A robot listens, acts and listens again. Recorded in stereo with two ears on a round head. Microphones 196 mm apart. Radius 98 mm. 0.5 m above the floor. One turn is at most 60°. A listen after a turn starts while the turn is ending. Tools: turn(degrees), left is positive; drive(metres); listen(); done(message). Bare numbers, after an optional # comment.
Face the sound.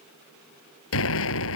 # The explosion: about 65° left or 115° left.
turn(60)
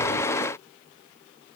listen()
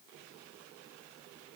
done("I heard an explosion, but can't make it out now. It was about 5° left or 55° left.")